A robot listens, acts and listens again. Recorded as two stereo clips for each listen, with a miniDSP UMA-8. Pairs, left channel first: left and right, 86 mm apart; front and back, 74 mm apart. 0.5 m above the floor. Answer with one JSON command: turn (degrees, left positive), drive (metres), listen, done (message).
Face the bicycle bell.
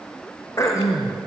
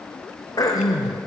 {"listen": true}
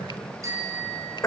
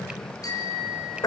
{"turn": -35}
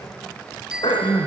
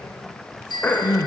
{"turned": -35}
{"done": "Found it: a bicycle bell, straight ahead, over 4 m away."}